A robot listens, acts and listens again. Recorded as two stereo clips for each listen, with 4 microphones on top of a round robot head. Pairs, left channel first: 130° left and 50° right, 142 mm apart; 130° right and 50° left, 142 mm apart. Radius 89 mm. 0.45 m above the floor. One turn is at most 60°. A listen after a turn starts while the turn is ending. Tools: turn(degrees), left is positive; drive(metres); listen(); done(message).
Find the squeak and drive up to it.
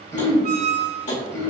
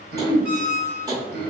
turn(degrees=-30)
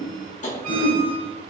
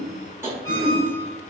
listen()
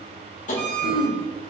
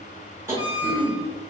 turn(degrees=-20)
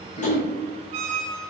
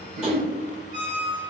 drive(metres=1.0)
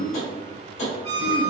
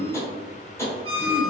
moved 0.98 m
drive(metres=1.0)
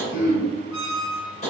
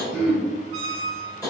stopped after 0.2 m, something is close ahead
done("Arrived at the squeak, straight ahead.")